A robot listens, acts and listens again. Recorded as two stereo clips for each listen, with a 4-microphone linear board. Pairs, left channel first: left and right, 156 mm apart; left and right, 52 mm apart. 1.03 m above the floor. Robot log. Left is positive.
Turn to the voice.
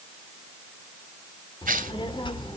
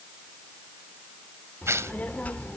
note: The child speaking: about 30° left or 150° left.
cmd yaw +30
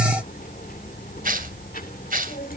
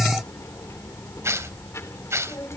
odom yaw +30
note: So it is at 115° left.
cmd yaw +115
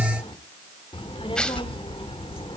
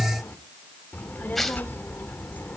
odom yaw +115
note: The child speaking is now 35° left.
cmd yaw +35
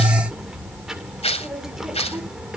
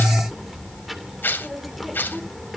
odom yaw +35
end: Facing the child speaking, 2 to 4 m away.